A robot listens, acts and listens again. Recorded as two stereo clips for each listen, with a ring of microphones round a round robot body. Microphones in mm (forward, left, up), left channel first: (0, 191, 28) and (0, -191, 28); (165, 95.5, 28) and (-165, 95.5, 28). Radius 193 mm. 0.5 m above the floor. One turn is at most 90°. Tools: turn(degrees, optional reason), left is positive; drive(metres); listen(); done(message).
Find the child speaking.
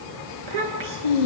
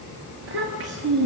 turn(degrees=-90, reason="The child speaking: 115° right.")
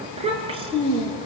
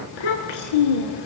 turn(degrees=-10, reason="The child speaking is now 10° right.")
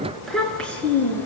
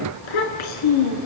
done("Facing the child speaking, over 4 m away.")